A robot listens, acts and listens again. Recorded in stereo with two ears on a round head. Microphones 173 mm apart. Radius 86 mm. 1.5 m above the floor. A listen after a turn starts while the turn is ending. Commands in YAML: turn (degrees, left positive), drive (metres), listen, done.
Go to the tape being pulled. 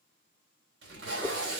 turn: -60
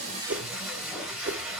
drive: 1.0
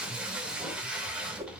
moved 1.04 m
drive: 1.0
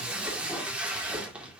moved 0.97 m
drive: 1.0
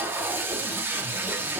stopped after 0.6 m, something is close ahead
turn: -15
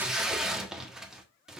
done: "Arrived at the tape being pulled, straight ahead."